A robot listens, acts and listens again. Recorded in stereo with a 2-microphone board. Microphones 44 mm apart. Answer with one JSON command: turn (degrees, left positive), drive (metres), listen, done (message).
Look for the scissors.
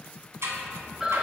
{"turn": -90}
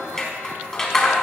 {"turn": 15}
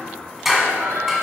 {"done": "Found it: scissors, straight ahead, 1 to 2 m away."}